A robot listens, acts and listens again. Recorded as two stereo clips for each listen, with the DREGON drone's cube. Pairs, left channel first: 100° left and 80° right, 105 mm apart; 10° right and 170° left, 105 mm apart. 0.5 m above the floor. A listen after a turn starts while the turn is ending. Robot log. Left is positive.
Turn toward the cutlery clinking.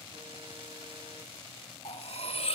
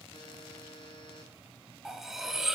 note: The cutlery clinking: 85° left.
cmd yaw +85
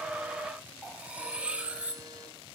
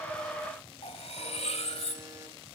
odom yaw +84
end: Found it: cutlery clinking, straight ahead.